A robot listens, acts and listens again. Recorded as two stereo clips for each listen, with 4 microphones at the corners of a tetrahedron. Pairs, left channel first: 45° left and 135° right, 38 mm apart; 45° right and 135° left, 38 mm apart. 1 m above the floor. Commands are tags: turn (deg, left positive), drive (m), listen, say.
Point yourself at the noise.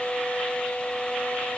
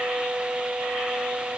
<listen/>
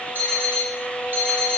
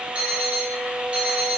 <turn deg="-165"/>
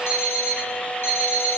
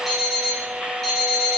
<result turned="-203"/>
<turn deg="40"/>
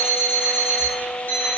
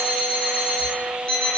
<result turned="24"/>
<turn deg="20"/>
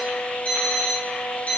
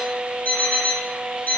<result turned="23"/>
<say>Facing the alarm clock.</say>